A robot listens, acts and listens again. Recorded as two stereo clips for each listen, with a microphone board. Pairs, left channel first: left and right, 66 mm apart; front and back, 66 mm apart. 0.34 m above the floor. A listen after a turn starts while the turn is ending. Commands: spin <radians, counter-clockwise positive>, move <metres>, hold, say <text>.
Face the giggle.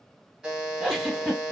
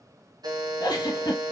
say Found it: a giggle, straight ahead.